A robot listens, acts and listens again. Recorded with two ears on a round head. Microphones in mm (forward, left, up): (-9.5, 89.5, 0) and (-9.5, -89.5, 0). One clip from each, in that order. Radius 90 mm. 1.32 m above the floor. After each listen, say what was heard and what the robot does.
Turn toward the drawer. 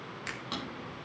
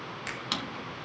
The drawer: about 65° right or 115° right. Turn 65° right.
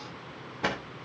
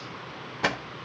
So it is at 30° right. Turn 30° right.
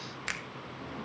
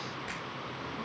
Keep listening.
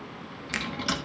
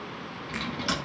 Found it: a drawer, straight ahead.